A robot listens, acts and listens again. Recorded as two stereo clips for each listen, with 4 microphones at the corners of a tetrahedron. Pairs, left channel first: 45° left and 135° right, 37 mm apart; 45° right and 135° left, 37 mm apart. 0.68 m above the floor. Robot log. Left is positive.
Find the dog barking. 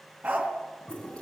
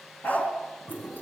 note: The dog barking: 90° right.
cmd yaw -90
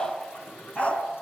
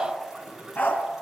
note: The dog barking is now 15° right.
cmd yaw -15
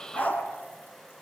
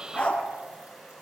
end: Facing the dog barking, 2 to 4 m away.